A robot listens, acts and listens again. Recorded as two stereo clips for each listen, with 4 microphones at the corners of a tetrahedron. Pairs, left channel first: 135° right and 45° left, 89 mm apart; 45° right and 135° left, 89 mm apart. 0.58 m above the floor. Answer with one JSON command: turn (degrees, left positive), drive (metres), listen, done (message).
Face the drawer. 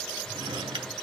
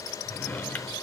{"turn": 25}
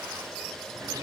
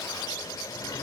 {"listen": true}
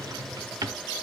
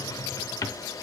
{"done": "Found it: a drawer, straight ahead, under 1 m away."}